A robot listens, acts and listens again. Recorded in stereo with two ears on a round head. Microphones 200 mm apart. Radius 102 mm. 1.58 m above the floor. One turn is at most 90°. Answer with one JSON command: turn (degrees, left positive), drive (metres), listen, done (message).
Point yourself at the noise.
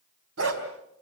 {"turn": -65}
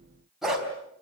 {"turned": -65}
{"done": "Found it: a dog barking, straight ahead."}